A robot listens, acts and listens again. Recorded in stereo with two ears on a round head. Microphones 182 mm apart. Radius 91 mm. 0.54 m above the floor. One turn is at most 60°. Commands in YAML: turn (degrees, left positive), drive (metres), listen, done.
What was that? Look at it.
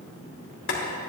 turn: 60
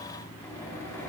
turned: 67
turn: 20
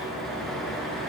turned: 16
done: "Found it: boiling, straight ahead."